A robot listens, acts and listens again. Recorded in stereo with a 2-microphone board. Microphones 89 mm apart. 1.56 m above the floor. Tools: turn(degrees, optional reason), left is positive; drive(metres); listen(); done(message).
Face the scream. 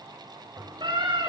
turn(degrees=-60, reason="The scream: about 60° right or 120° right.")
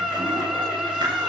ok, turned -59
done("Found it: a scream, straight ahead, over 4 m away.")